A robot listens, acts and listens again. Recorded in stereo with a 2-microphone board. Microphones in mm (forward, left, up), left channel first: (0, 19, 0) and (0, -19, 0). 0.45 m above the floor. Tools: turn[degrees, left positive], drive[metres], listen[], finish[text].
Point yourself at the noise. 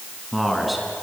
Action: turn[30]
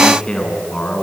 Thought: So it is at 160° left.
Action: turn[160]
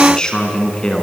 Thought: The man speaking is now 25° left.
Action: turn[25]
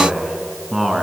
Action: finish[Found it: a man speaking, straight ahead.]